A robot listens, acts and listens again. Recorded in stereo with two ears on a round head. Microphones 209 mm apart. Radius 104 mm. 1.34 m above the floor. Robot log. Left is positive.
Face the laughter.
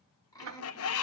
note: The laughter: about 15° left or 165° left.
cmd yaw +15
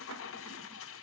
cmd idle
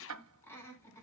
cmd yaw +30
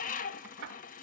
cmd idle
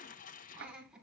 end: Facing the laughter.